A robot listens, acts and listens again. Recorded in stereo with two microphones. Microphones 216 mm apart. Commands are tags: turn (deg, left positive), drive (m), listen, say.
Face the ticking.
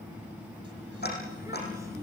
<turn deg="50"/>
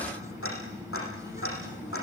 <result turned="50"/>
<turn deg="80"/>
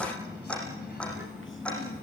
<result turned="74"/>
<say>Found it: ticking, straight ahead.</say>